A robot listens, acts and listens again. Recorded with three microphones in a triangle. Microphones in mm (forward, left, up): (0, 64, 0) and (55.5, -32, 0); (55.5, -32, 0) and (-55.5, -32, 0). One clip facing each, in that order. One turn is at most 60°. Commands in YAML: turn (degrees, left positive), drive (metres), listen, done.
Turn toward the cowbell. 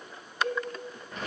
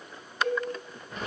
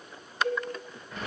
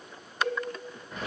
turn: -60
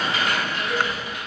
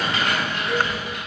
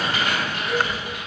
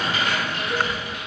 turn: -60
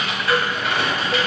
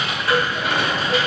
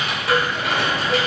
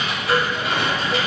turn: -30
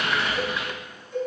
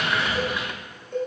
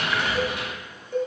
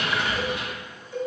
turn: -35
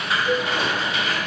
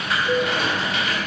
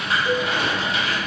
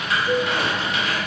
done: "Found it: a cowbell, straight ahead, under 1 m away."